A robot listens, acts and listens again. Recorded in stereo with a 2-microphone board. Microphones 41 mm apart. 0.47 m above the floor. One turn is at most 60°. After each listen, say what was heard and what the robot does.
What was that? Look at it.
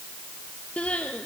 The crying: about 30° left or 150° left. Turn 30° left.
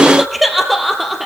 Facing the crying, 2 to 4 m away.